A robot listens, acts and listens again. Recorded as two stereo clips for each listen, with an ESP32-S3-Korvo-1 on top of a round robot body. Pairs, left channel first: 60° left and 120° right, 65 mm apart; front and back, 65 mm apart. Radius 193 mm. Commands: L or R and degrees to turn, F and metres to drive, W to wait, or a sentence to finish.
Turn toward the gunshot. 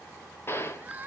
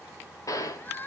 L15
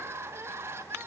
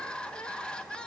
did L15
I heard a gunshot from this way, but can't make it out now.